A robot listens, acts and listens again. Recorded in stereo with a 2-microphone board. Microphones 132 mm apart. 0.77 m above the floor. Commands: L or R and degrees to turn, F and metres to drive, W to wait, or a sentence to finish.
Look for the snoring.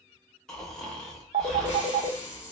L30
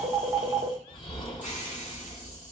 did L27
L145
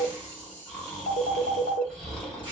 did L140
Facing the snoring, 1 to 2 m away.